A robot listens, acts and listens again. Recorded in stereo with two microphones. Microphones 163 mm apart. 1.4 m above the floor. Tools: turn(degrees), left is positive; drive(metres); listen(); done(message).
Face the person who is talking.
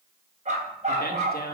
turn(degrees=70)
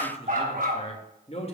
turn(degrees=40)
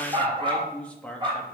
done("Found it: a man speaking, straight ahead.")